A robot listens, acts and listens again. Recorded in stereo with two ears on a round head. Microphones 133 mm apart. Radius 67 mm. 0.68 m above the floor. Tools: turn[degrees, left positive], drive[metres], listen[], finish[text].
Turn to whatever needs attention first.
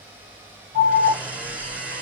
Thought: The alarm: about 50° right or 130° right.
Action: turn[-50]
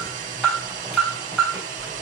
Action: finish[Facing the alarm, 2 to 4 m away.]